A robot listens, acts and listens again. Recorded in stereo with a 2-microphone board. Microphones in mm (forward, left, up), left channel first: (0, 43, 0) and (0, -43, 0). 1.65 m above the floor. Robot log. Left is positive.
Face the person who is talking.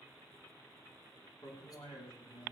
cmd yaw +90
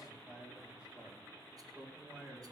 note: So it is at 10° right.
cmd yaw -10
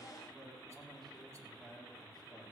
end: Found it: a man speaking, straight ahead.